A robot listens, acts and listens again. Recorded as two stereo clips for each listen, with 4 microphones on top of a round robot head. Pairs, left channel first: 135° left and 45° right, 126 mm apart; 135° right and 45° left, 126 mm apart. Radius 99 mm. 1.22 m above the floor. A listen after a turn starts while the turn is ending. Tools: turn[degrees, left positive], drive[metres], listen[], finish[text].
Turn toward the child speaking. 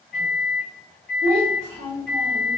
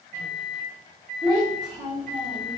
Thought: The child speaking: 20° left.
Action: turn[20]
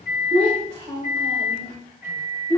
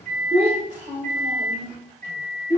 Thought: The child speaking is now 15° left.
Action: turn[15]
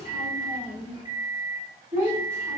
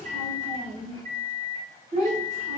Thought: The child speaking is now 10° left.
Action: turn[10]
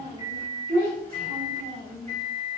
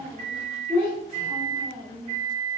Action: finish[Facing the child speaking, 2 to 4 m away.]